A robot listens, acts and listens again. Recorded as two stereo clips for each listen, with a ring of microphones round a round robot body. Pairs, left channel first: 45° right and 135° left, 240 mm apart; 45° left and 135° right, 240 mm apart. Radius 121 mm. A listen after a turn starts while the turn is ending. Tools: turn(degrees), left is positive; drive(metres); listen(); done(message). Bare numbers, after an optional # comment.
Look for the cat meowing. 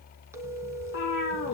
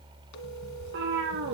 # The cat meowing: 90° right.
turn(-90)
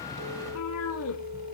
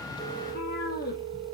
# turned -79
# The cat meowing is now 10° right.
turn(-10)
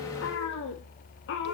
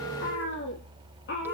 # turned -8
done("Found it: a cat meowing, straight ahead, 2 to 4 m away.")